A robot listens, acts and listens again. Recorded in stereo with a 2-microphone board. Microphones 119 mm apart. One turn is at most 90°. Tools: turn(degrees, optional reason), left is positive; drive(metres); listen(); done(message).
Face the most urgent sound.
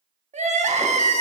turn(degrees=-90)
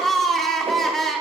done("Found it: crying, straight ahead.")